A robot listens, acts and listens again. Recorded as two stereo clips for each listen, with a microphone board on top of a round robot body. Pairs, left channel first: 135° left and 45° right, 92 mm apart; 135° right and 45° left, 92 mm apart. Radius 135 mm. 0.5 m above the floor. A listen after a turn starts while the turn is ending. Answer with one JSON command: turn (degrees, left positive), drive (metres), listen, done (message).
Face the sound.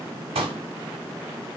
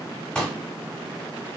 {"turn": -55}
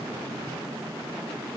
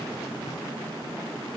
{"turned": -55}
{"done": "I heard a pop from this way, but can't make it out now."}